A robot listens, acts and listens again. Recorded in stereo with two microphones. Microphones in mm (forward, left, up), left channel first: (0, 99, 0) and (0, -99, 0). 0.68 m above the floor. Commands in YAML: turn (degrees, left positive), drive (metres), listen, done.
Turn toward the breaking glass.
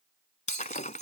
turn: 40
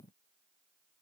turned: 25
listen: true
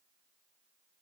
done: "I heard breaking glass, but can't make it out now. It was about 15° left or 115° left."